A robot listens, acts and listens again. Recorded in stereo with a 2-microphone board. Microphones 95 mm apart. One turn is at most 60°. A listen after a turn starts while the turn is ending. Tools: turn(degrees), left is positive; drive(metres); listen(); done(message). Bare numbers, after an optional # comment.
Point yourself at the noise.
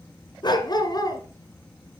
# The dog barking: about 40° left or 140° left.
turn(40)
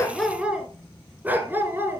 # So it is at 25° right.
turn(-25)
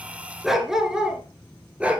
# The dog barking is now 15° right.
turn(-15)
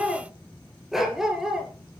done("Facing the dog barking, 2 to 4 m away.")